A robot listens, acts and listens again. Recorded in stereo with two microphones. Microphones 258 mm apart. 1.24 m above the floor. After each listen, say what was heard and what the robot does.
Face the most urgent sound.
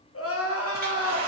The crying: about 60° left or 120° left. Turn 60° left.
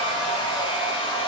Keep listening.
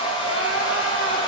Keep listening.
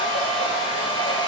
I heard crying, but can't make it out now. It was about straight ahead or 60° left.